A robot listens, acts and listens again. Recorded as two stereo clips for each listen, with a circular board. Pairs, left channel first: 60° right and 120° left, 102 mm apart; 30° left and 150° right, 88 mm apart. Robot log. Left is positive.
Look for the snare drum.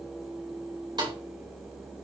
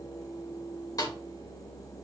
note: The snare drum: 75° left.
cmd yaw +75
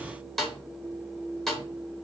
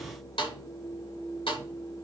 note: The snare drum is now 25° left.
cmd yaw +25
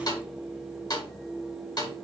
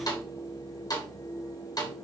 note: The snare drum is now 15° right.
cmd yaw -15
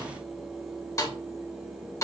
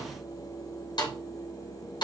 end: Facing the snare drum.